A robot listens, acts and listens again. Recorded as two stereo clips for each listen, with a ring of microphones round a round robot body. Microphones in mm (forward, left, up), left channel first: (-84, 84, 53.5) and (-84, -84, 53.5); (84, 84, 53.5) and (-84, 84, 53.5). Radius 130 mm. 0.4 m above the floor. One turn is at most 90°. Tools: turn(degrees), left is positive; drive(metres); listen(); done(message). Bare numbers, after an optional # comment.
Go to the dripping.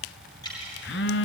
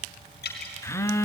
# The dripping: 20° left.
turn(20)
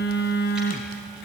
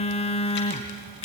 listen()
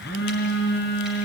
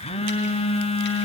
listen()
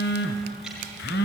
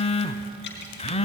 done("I heard dripping from this way, but can't make it out now. I did not reach it.")